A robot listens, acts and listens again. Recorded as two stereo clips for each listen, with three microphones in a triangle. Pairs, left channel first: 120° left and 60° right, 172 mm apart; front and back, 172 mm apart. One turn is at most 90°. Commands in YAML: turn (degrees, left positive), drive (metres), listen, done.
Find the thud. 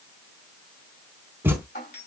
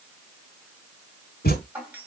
turn: 20
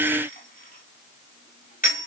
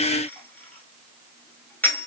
done: "Facing where the thud came from. I can't hear it now."